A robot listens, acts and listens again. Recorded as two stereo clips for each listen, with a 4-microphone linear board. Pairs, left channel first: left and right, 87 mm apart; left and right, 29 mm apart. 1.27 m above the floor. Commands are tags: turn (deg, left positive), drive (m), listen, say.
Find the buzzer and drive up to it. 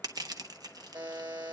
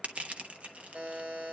<turn deg="-55"/>
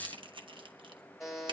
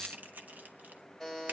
<drive m="1.0"/>
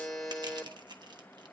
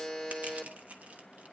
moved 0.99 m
<drive m="1.0"/>
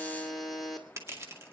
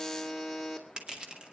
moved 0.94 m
<drive m="1.0"/>
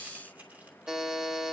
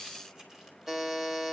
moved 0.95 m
<drive m="1.0"/>
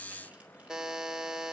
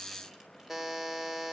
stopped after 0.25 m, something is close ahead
<say>I am next to the buzzer.</say>